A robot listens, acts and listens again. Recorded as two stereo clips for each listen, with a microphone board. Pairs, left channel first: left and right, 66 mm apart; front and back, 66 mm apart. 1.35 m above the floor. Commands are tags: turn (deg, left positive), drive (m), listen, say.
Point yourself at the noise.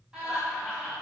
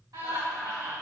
<turn deg="-160"/>
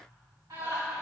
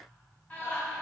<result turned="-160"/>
<turn deg="-65"/>
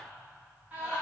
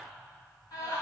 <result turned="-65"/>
<turn deg="-20"/>
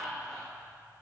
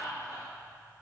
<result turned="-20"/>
<say>Facing the laughter, 2 to 4 m away.</say>